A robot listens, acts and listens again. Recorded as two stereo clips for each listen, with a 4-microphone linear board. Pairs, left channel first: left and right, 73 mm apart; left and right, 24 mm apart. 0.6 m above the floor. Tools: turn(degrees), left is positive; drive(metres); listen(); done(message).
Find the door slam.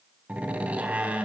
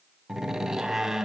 turn(degrees=-20)
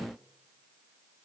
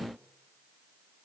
listen()
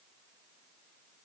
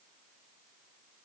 done("I heard a door slam, but can't make it out now. It was about straight ahead or 140° right.")